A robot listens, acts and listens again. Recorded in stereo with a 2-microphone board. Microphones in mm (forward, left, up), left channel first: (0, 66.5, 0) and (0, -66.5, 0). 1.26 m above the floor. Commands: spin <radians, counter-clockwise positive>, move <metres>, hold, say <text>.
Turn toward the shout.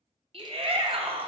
spin -0.79
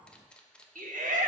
spin -1.57
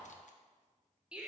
spin -0.17
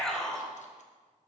say Facing the shout.